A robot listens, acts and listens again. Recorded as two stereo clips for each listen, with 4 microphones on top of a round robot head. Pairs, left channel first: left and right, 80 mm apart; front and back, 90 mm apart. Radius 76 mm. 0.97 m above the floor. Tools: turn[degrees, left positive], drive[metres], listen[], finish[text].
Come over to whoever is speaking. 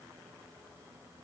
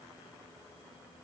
Action: listen[]
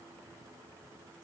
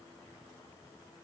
Action: listen[]
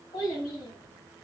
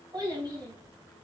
Thought: The child speaking: 135° left.
Action: turn[135]
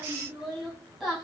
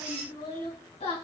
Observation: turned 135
Action: drive[1.0]
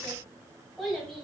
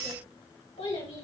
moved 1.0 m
Action: drive[1.0]
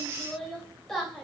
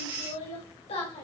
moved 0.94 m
Action: drive[1.0]
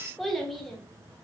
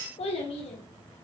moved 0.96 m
Action: drive[1.0]
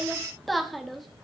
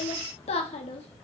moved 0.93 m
Action: drive[1.0]
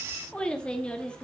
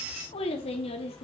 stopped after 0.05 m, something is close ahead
Thought: The child speaking is now 15° left.
Action: turn[15]
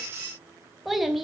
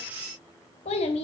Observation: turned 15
Action: finish[I am next to the child speaking.]